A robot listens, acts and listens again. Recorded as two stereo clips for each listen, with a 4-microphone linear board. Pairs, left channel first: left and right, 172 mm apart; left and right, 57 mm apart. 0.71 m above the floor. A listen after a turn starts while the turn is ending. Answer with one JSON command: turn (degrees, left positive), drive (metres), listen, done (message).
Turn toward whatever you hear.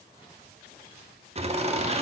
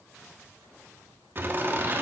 {"turn": -35}
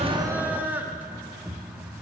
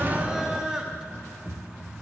{"turn": -10}
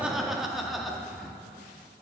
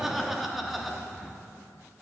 {"done": "Found it: laughter, straight ahead, under 1 m away."}